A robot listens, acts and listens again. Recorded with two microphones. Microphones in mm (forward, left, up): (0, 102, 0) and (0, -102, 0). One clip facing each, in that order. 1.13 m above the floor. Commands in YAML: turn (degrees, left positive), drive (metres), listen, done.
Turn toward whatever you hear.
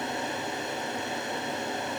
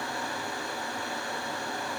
listen: true
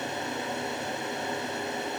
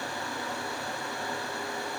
listen: true
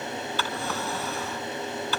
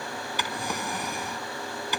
turn: -15
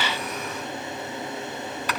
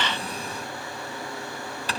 turn: -150
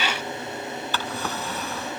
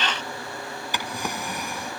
turn: -15
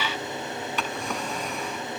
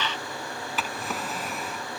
done: "Found it: a drawer, straight ahead."